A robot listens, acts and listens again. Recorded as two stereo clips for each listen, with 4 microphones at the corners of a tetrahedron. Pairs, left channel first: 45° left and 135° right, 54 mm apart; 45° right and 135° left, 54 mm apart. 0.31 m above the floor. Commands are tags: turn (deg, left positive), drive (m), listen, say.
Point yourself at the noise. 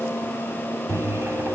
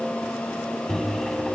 <turn deg="-130"/>
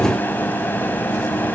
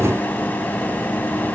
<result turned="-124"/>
<say>Facing the microwave, 2 to 4 m away.</say>